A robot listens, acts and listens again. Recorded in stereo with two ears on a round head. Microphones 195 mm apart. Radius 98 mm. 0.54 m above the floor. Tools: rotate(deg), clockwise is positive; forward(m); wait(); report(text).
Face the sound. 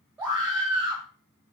rotate(30)
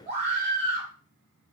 rotate(140)
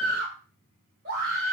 rotate(60)
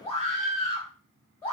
rotate(-15)
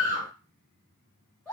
report("Facing the scream, 2 to 4 m away.")